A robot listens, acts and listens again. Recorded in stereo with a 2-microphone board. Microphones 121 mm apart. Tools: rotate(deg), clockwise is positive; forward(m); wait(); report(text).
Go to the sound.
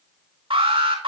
rotate(50)
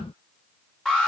forward(1.0)
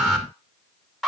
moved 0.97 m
forward(1.0)
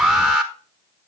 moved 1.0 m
forward(1.0)
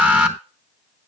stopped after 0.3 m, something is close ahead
rotate(10)
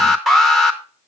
report("Arrived at the alarm, straight ahead.")